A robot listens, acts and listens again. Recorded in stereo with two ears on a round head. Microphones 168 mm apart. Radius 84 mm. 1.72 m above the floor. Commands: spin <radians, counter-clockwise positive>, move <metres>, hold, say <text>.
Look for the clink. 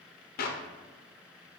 hold
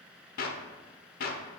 hold
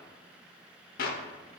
say I can't make out a clink to turn to.